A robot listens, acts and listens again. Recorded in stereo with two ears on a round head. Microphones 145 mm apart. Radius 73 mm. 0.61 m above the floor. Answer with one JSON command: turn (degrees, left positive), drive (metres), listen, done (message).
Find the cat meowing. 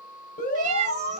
{"turn": -45}
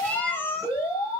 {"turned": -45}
{"turn": 15}
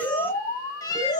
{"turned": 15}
{"turn": 25}
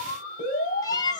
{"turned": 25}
{"turn": 25}
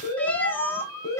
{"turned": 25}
{"turn": 15}
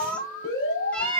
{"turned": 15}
{"done": "Facing the cat meowing."}